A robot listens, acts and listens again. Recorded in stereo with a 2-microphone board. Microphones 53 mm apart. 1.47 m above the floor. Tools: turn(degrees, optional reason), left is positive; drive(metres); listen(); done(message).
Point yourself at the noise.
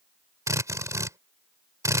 turn(degrees=-90)
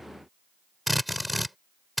done("Found it: a drill, straight ahead.")